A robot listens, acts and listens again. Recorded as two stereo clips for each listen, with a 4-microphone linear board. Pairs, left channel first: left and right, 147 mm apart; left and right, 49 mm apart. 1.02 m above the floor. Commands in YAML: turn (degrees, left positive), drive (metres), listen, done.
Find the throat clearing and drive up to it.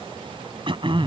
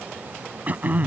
turn: -35
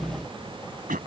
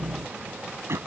turn: -105
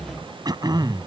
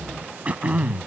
turn: -30
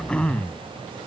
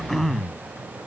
drive: 1.0
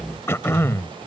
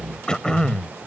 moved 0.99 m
turn: 20
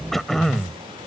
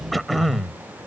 drive: 1.0
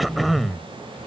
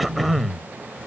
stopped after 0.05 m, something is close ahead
done: "Arrived at the throat clearing, straight ahead."